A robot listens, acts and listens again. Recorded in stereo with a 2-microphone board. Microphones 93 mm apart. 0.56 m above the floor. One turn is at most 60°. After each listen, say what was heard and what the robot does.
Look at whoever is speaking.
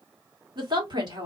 The woman speaking: about 55° right or 125° right. Turn 55° right.
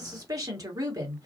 So it is at 50° right. Turn 50° right.
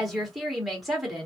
Facing the woman speaking.